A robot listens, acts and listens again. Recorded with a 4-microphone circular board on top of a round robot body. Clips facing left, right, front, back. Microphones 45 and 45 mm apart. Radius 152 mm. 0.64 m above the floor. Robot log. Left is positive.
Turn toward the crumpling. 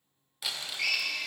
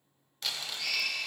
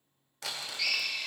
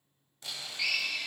end: Found it: crumpling, straight ahead, under 1 m away.